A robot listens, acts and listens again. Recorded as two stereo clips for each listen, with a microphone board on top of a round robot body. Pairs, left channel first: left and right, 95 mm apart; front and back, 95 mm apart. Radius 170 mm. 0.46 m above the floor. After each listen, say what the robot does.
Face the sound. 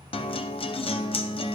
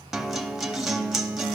Turn 95° left.
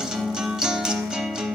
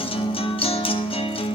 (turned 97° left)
Facing the guitar.